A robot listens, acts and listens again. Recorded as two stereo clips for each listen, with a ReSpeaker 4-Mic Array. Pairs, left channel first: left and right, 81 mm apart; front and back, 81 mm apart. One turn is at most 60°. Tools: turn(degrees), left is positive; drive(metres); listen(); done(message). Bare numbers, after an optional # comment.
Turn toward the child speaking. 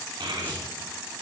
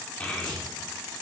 # The child speaking: 75° right.
turn(-60)
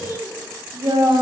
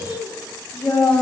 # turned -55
# The child speaking is now 45° right.
turn(-45)
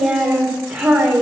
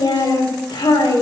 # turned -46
# The child speaking is now 15° right.
turn(-15)
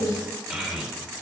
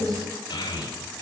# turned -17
done("Facing the child speaking.")